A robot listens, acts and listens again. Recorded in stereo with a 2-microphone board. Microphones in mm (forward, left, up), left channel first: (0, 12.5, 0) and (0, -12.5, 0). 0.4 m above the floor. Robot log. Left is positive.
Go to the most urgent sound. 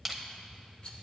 cmd idle
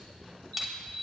note: The alarm: about 65° left or 115° left.
cmd yaw +65
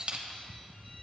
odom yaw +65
cmd idle
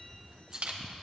cmd idle
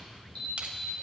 note: So it is at 45° left.
cmd yaw +45
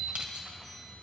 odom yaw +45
cmd idle
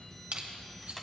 cmd idle
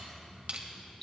note: The alarm is now 10° left.
cmd yaw +10
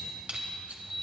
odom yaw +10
cmd fwd 1.0
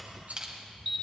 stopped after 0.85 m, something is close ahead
end: Arrived at the alarm, straight ahead.